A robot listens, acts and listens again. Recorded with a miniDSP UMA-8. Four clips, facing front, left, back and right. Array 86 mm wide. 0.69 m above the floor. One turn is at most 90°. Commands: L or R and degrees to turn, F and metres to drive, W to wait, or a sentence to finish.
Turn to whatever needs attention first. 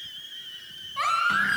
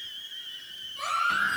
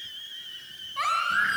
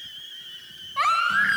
R90
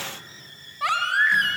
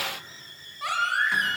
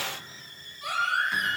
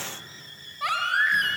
R15
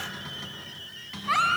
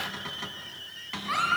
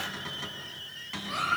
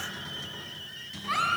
Found it: a baby crying, straight ahead.